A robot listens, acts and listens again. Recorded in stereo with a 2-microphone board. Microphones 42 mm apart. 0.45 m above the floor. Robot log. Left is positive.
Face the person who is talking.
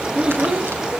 note: The child speaking: about 25° right or 155° right.
cmd yaw -25
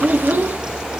note: So it is at 125° right.
cmd yaw -125
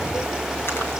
cmd idle
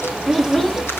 end: Found it: a child speaking, straight ahead.